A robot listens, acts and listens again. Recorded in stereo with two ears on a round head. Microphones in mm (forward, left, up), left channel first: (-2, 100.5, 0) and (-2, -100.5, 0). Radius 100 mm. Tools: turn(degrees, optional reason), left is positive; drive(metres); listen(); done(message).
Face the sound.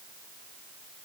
listen()
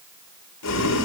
turn(degrees=90)
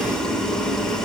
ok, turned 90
done("Found it: boiling, straight ahead, over 4 m away.")